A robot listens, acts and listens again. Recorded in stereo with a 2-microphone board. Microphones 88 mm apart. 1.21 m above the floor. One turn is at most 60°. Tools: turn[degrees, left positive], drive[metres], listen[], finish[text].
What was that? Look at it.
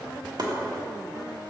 Thought: The chopping: about 55° right or 125° right.
Action: turn[-55]
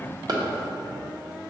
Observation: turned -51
Thought: So it is at 65° right.
Action: turn[-60]
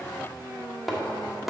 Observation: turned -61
Action: finish[Facing the chopping.]